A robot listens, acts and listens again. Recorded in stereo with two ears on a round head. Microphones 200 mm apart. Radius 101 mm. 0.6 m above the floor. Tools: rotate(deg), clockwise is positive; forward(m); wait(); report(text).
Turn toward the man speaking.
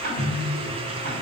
wait()
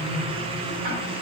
wait()
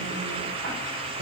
report("I can't make out a man speaking, only ticking and a microwave.")